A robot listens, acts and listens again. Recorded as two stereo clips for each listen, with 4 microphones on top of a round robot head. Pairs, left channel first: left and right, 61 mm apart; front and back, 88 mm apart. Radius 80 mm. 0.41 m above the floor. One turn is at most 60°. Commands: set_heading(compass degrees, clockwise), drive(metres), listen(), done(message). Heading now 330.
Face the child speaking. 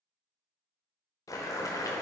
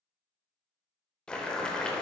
listen()
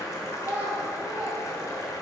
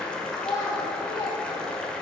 set_heading(350)
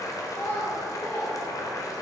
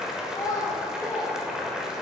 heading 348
set_heading(293)
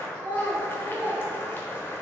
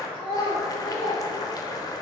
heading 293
set_heading(268)
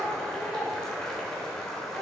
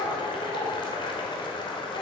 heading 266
done("Facing the child speaking, 1 to 2 m away.")